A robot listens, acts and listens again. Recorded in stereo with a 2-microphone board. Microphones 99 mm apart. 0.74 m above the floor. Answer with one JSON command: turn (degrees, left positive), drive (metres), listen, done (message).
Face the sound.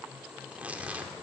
{"turn": -30}
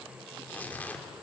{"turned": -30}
{"turn": 15}
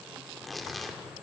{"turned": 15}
{"done": "Found it: tearing paper, straight ahead."}